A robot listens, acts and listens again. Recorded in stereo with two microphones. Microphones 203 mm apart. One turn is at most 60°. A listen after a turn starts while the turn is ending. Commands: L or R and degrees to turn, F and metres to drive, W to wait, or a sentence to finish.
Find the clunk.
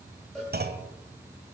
R50
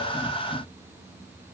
W
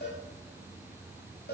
I heard a clunk, but can't make it out now. It was about straight ahead or 80° right.